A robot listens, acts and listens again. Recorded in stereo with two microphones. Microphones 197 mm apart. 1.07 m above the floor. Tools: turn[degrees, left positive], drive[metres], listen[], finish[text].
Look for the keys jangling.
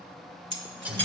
Thought: The keys jangling: about 70° right or 110° right.
Action: turn[-70]
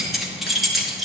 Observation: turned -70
Action: finish[Found it: keys jangling, straight ahead.]